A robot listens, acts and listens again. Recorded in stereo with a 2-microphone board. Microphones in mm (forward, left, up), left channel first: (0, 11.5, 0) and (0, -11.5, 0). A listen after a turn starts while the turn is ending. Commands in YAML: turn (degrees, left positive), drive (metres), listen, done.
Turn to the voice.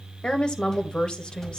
turn: 40
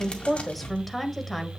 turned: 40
done: "Found it: a woman speaking, straight ahead."